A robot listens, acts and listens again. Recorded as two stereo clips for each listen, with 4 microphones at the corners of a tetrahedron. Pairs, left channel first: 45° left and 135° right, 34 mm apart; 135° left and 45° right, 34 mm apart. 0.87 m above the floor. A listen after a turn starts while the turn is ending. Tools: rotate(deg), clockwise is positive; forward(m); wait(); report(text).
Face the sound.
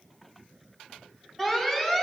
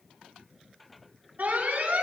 rotate(50)
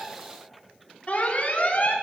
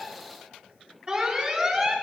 rotate(-10)
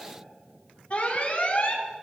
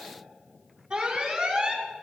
report("Found it: an alarm, straight ahead.")